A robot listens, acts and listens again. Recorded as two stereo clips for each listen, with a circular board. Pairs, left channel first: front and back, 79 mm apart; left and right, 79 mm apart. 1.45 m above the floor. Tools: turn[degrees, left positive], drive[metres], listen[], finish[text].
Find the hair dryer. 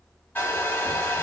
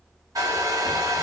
Thought: The hair dryer: 60° right.
Action: turn[-60]
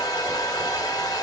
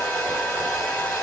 Thought: The hair dryer is now 20° left.
Action: turn[20]
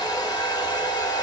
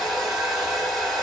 Action: finish[Facing the hair dryer, 1 to 2 m away.]